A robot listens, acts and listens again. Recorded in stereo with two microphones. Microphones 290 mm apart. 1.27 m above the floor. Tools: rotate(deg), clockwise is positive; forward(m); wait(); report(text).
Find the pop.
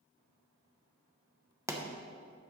rotate(30)
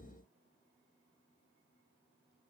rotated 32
wait()
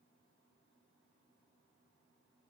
report("I heard a pop, but can't make it out now. It was about 20° left or 135° right.")